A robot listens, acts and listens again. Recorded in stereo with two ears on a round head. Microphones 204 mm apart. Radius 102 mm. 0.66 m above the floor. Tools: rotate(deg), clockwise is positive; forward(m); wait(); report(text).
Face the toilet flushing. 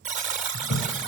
rotate(-70)
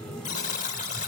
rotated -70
report("Found it: a toilet flushing, straight ahead, 1 to 2 m away.")